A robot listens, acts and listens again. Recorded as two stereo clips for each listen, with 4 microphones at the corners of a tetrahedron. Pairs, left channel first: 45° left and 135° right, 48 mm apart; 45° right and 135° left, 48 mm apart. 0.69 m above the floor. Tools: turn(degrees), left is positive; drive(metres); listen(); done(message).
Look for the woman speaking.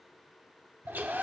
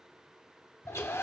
listen()
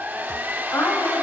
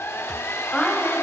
turn(degrees=20)
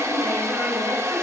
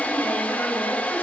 listen()
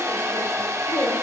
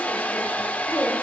listen()
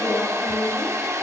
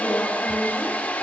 done("Found it: a woman speaking, straight ahead.")